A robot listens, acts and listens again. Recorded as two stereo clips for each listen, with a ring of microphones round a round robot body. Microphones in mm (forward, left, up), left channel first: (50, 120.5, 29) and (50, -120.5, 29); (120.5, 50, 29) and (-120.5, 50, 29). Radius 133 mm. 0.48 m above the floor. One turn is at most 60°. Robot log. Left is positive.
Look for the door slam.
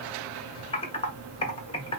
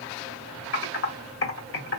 cmd idle
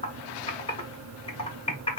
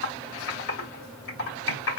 cmd idle
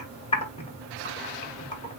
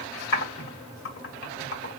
end: I can't make out a door slam to turn to.